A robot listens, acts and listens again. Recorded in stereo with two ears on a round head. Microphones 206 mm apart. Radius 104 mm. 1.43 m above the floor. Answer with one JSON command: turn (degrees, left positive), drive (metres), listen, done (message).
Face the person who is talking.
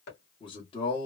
{"turn": 20}
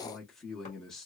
{"done": "Facing the man speaking, under 1 m away."}